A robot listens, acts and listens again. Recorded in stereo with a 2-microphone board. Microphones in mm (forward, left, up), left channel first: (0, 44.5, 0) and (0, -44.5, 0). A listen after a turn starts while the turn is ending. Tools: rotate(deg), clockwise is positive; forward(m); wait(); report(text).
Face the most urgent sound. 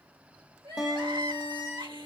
rotate(75)
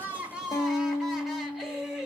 report("Found it: crying, straight ahead.")